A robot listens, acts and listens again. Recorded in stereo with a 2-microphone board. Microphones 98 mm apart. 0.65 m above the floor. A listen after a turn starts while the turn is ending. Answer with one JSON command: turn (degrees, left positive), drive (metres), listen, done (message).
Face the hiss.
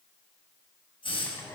{"turn": 65}
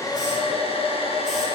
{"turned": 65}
{"listen": true}
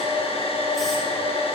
{"listen": true}
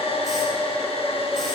{"done": "I heard a hiss, but can't make it out now. It was about straight ahead or 50° left."}